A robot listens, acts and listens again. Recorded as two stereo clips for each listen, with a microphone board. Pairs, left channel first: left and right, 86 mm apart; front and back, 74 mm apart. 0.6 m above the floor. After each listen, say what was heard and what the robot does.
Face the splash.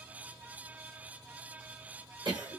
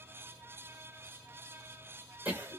Keep listening.
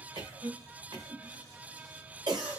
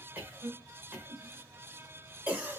Keep listening.
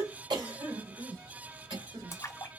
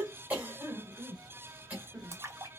The splash: 140° left. Turn 140° left.
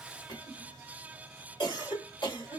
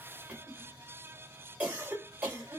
I heard a splash from this way, but can't make it out now.